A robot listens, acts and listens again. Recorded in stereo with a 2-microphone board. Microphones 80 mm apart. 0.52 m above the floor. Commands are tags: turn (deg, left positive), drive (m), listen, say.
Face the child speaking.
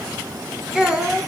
<turn deg="-30"/>
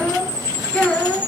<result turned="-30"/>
<turn deg="15"/>
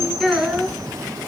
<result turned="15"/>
<say>Facing the child speaking, over 4 m away.</say>